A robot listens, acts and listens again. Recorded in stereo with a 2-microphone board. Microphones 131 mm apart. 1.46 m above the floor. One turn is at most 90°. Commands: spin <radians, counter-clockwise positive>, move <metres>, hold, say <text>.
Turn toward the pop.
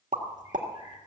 spin -1.31
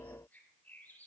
hold
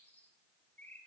say I heard a pop, but can't make it out now. It was about straight ahead or 30° right.